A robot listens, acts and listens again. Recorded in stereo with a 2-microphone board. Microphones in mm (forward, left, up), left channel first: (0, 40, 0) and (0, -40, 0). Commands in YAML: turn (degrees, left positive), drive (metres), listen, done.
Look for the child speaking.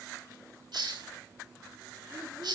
listen: true
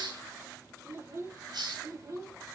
turn: -50
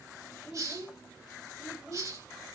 turn: -15
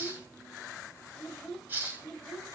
done: "Found it: a child speaking, straight ahead."